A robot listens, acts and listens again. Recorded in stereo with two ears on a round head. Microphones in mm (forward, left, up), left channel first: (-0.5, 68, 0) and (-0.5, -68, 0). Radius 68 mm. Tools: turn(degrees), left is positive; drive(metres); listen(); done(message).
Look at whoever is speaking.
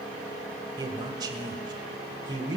turn(degrees=-25)
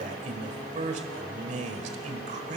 turn(degrees=-125)
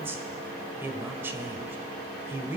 turn(degrees=-15)
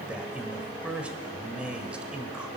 turn(degrees=-10)
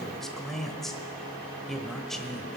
done("Found it: a man speaking, straight ahead, 1 to 2 m away.")